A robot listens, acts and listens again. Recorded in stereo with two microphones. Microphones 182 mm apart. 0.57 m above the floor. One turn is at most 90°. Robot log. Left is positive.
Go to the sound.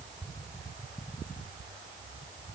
cmd idle
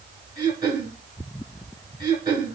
note: The throat clearing: about 25° right or 155° right.
cmd yaw -25
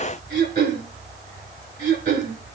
note: So it is at 130° right.
cmd yaw -90
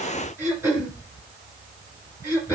note: The throat clearing is now 15° right.
cmd yaw -15
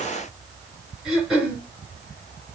cmd fwd 1.0
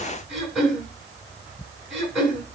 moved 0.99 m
cmd fwd 1.0
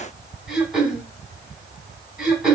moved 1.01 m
cmd fwd 1.0
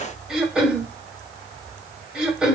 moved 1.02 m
cmd fwd 1.0
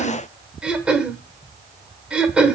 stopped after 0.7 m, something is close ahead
end: I am next to the throat clearing.